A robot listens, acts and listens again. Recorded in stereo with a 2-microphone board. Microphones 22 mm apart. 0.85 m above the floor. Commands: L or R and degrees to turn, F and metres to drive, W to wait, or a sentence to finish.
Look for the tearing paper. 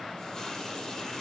W
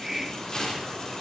L45
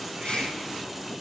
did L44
W
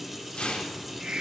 L90
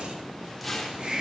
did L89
Found it: tearing paper, straight ahead, 2 to 4 m away.